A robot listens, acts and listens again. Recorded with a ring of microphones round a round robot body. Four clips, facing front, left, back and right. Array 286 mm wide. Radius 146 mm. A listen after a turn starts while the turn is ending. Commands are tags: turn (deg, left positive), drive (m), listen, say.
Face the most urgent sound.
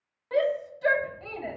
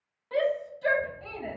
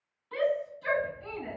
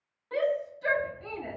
<say>Facing the shout.</say>